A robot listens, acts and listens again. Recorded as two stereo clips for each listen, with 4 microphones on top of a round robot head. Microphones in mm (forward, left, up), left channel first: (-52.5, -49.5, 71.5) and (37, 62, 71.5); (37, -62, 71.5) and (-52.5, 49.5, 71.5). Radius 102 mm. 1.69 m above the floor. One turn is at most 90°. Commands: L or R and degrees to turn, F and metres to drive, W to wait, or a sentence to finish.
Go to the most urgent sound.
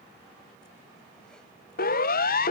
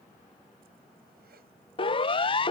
R90
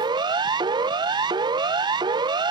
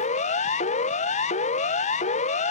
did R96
R10
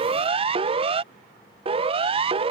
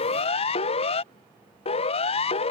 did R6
F1.0
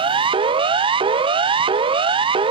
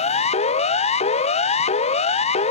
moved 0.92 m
F1.0
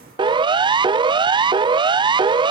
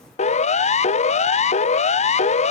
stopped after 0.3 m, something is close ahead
R10
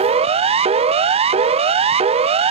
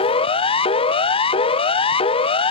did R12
I am next to the siren.